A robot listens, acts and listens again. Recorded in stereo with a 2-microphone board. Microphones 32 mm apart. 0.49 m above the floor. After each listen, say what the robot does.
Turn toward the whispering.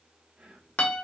Turn 45° right.
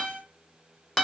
Keep listening.
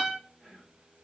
Turn 10° right.
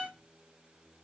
Keep listening.
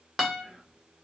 Facing the whispering, 1 to 2 m away.